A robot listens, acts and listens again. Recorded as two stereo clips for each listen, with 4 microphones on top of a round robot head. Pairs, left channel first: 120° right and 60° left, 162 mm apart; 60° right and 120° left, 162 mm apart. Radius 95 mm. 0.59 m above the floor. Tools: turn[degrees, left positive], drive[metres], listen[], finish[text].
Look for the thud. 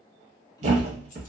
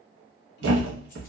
Thought: The thud: 110° left.
Action: turn[110]
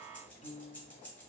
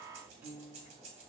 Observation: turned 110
Action: finish[I heard a thud from this way, but can't make it out now.]